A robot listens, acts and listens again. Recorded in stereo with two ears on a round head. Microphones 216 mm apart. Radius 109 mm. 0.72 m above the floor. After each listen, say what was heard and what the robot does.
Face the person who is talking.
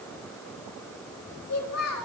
The child speaking: about 65° left or 115° left. Turn 65° left.
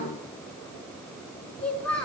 Facing the child speaking, over 4 m away.